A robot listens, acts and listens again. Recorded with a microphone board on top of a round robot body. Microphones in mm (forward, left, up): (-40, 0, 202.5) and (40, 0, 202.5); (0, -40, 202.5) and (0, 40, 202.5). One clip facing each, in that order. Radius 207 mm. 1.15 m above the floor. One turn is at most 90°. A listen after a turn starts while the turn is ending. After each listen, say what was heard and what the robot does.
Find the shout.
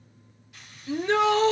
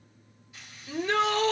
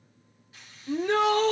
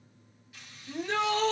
The shout: 120° right. Turn 90° right.
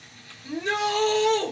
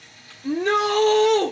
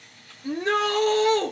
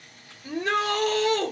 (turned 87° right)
The shout is now 35° right. Turn 35° right.
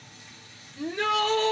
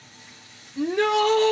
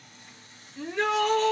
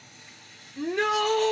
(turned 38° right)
Facing the shout, 1 to 2 m away.